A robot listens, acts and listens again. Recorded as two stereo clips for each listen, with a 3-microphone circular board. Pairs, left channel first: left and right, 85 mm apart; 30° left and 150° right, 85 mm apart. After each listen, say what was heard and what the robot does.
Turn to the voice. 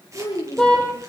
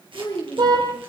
The child speaking: 85° left. Turn 85° left.
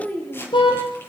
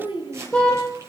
The child speaking is now 20° left. Turn 20° left.
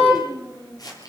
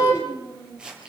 Found it: a child speaking, straight ahead.